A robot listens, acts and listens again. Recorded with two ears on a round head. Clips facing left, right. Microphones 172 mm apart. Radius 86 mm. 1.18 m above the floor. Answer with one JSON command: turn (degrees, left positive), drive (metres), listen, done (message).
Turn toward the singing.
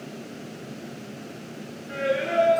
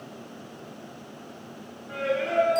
{"turn": 30}
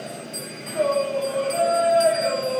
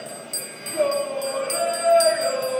{"turn": -65}
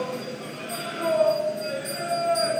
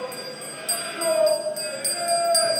{"turn": -35}
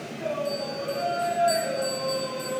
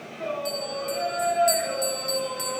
{"done": "Facing the singing, 2 to 4 m away."}